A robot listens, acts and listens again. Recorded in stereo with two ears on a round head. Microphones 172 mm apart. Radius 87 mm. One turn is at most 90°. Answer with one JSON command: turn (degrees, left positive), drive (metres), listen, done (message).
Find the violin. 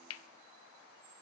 {"listen": true}
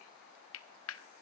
{"listen": true}
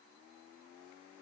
{"done": "I can't make out a violin to turn to."}